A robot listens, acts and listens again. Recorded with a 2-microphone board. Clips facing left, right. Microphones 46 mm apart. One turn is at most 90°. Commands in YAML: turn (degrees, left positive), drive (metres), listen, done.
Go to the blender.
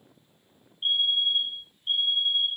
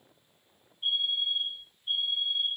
listen: true
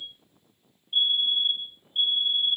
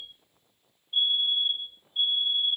listen: true
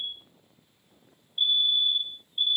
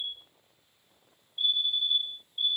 done: "I can't make out a blender, only a fire alarm."